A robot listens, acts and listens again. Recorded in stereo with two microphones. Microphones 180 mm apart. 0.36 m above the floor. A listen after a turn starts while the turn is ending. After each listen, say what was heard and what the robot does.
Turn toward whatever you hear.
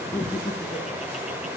The laughter: about 30° left or 150° left. Turn 30° left.
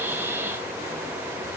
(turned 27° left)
Keep listening.
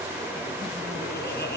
So it is at 120° left. Turn 120° left.
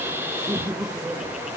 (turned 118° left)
Facing the laughter, over 4 m away.